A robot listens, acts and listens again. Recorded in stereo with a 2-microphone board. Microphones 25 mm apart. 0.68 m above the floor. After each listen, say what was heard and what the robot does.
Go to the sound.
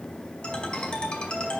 The ringtone: about 35° left or 145° left. Turn 35° left.
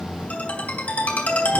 So it is at 110° left. Turn 110° left.
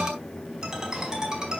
The ringtone is now 20° right. Turn 20° right.
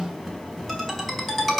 Drive 1.0 m forward.
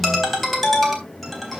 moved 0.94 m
Drive 1.0 m forward.
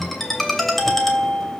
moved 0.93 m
The ringtone is now 10° left. Turn 10° left.
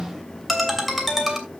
Drive 1.0 m forward.
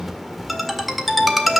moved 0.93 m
Drive 1.0 m forward.
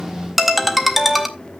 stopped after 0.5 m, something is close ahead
I am next to the ringtone.